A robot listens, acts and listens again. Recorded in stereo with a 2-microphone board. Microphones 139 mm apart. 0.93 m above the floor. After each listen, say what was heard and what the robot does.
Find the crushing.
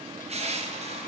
The crushing: about 50° right or 130° right. Turn 50° right.
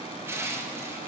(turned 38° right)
So it is at 20° right. Turn 20° right.
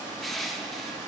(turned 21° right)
Found it: crushing, straight ahead, under 1 m away.